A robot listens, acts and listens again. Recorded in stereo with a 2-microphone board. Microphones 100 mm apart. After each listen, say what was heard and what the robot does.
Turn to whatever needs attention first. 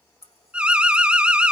Turn 30° right.
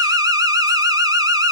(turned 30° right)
So it is at 140° right. Turn 140° right.
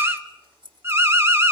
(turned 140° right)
The alarm is now 25° right. Turn 25° right.
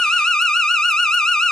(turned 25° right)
Facing the alarm, 1 to 2 m away.